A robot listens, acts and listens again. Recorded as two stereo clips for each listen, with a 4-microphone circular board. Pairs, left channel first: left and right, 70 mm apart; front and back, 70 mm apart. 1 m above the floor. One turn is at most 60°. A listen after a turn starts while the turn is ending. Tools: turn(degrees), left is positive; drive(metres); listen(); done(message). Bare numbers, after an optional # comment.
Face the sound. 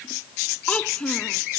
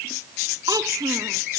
# The child speaking: 165° left.
turn(60)
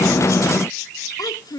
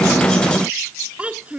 # The child speaking is now 110° left.
turn(60)
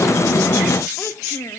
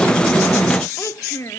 # The child speaking is now 45° left.
turn(45)
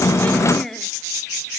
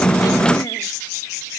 listen()
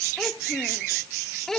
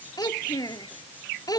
done("Facing the child speaking.")